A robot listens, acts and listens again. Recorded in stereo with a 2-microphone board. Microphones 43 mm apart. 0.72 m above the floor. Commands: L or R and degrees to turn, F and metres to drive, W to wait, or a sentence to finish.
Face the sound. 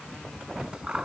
R20
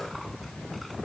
W
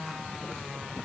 W
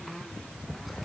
I heard scissors, but can't make it out now. It was about straight ahead or 140° right.